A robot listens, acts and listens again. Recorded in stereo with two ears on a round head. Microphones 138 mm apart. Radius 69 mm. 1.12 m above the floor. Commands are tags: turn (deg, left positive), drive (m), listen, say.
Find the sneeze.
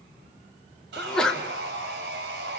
<turn deg="30"/>
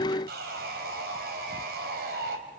<listen/>
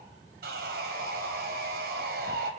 <say>I heard a sneeze, but can't make it out now. It was about 25° right or 145° left.</say>